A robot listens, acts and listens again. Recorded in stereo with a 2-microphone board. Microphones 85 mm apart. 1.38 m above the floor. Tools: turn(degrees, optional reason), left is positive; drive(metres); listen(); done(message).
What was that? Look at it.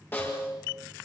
turn(degrees=25, reason="The snare drum: about 25° left or 155° left.")
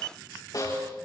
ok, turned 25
turn(degrees=130, reason="So it is at 130° left.")
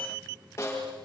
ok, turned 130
turn(degrees=35, reason="The snare drum is now 35° left.")
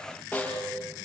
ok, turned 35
turn(degrees=15, reason="The snare drum is now 15° left.")
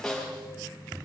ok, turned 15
done("Facing the snare drum.")